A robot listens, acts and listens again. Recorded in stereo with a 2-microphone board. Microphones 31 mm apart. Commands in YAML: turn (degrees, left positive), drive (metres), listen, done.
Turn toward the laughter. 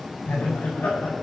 turn: 90
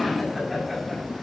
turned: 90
done: "Facing the laughter, over 4 m away."